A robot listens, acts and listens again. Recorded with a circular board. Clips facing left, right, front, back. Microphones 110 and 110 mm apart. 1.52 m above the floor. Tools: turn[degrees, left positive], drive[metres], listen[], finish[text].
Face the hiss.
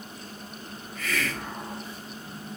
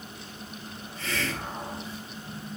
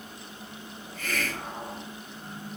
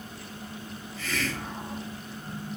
Thought: The hiss: 30° right.
Action: turn[-30]
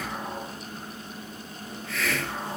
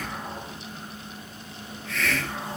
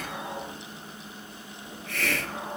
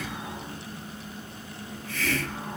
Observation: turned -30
Action: finish[Found it: a hiss, straight ahead.]